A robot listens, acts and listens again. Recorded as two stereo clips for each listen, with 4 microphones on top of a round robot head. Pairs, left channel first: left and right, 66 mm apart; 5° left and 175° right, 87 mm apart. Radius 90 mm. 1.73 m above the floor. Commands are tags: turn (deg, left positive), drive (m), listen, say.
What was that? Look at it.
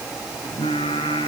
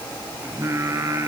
<turn deg="130"/>
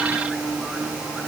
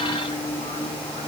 <say>Facing the singing.</say>